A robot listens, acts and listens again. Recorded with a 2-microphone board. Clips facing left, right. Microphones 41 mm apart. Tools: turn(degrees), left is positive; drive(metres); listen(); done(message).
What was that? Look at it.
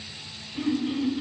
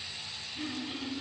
turn(degrees=90)
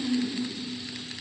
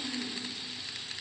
done("Facing the throat clearing.")